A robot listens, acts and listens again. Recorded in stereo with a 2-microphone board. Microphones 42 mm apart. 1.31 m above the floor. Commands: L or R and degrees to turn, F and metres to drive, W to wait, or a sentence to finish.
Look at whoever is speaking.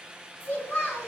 L55
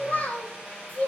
L35
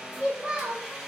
R20
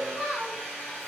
R15
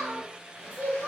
R20
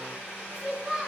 Facing the child speaking.